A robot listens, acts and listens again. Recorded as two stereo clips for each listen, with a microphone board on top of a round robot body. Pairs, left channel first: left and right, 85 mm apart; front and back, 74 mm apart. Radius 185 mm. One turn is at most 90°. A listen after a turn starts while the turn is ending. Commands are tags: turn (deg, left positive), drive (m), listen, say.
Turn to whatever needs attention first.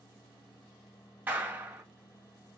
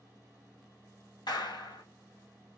<listen/>
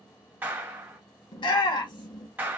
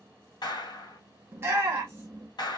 <turn deg="90"/>
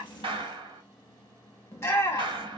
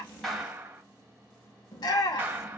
<turn deg="30"/>
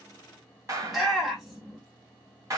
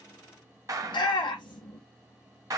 <say>Found it: a shout, straight ahead, under 1 m away.</say>